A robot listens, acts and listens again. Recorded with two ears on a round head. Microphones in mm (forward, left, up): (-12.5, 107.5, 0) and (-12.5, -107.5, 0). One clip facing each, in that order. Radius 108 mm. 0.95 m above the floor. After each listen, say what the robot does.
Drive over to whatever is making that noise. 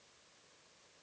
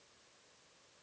Keep listening.
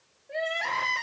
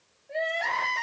Turn 30° left.
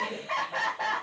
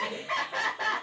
Turn 20° right.
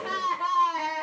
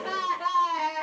Drive 1.0 m forward.
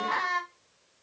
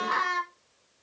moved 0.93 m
Turn 15° right.
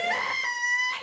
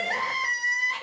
Drive 1.0 m forward.
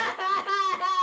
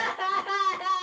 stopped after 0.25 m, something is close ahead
Arrived at the crying, straight ahead.